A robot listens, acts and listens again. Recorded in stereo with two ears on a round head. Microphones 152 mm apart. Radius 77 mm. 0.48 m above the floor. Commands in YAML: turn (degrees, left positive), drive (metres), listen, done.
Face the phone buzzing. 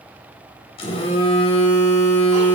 turn: 35
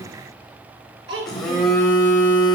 done: "Facing the phone buzzing."